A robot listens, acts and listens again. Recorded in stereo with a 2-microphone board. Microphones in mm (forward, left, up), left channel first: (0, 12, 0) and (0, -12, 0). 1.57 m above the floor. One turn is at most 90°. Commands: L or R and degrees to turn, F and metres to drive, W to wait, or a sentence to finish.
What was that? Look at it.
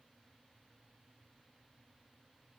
W
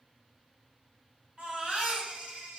R55
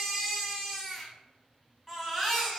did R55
R15
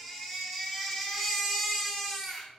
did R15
Facing the baby crying, 2 to 4 m away.